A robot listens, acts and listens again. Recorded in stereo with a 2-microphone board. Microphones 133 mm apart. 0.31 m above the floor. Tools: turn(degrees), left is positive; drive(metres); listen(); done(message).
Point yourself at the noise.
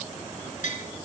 turn(degrees=70)
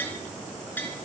turn(degrees=15)
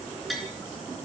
done("Facing the tapping, over 4 m away.")